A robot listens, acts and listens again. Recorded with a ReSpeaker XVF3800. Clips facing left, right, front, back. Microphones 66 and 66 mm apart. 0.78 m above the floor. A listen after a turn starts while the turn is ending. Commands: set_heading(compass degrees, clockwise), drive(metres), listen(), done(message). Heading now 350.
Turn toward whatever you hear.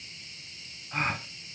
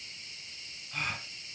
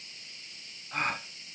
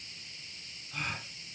set_heading(310)
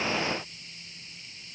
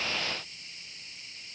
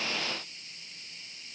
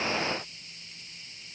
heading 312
done("Facing where the gasp came from. I can't hear it now.")